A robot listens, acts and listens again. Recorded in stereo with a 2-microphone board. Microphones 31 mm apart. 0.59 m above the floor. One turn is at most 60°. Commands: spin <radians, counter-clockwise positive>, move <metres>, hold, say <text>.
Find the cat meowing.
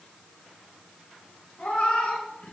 spin 0.79
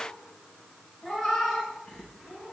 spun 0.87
say Found it: a cat meowing, straight ahead, over 4 m away.